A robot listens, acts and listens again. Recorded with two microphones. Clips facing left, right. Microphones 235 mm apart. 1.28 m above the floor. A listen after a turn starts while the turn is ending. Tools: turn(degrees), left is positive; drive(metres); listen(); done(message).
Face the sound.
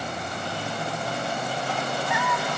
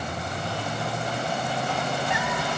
turn(degrees=-20)
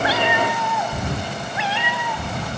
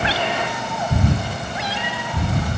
turn(degrees=-40)
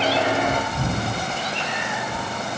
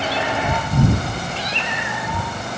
turn(degrees=-100)
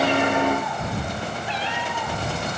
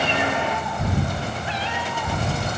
done("Found it: a cat meowing, straight ahead.")